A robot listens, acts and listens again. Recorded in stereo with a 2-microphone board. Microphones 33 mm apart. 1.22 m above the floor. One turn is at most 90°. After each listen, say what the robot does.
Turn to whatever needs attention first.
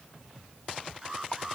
Turn 30° right.
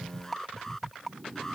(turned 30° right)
Turn 15° left.
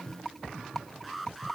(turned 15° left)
Found it: an alarm, straight ahead.